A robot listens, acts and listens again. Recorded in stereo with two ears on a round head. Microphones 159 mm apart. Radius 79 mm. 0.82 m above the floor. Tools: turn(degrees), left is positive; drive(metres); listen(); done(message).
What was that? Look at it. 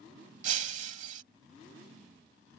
turn(degrees=-45)
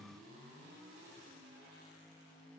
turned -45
listen()
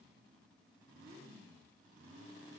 done("I heard breaking glass, but can't make it out now. It was about straight ahead or 90° right.")